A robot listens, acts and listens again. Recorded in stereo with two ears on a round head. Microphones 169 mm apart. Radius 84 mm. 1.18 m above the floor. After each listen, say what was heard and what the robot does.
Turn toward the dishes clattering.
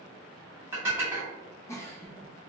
Turn 30° right.
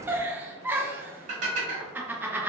So it is at 135° right. Turn 135° right.
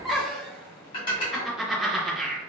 The dishes clattering is now 30° left. Turn 30° left.
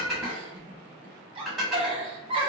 Found it: dishes clattering, straight ahead.